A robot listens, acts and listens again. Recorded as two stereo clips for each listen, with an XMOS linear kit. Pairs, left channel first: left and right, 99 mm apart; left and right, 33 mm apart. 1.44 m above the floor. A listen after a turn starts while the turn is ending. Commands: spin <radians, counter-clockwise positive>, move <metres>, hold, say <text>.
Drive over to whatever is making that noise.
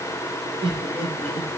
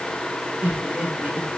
spin -1.31
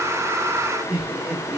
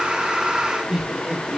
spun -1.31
spin -0.52
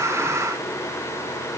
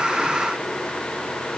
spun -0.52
hold
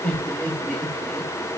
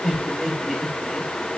spin 0.17
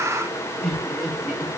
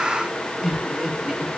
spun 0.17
move 1.0
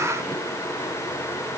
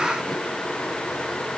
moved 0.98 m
hold
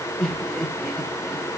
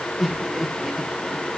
move 1.0
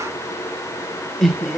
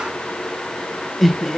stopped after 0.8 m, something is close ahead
say Arrived at the laughter, straight ahead.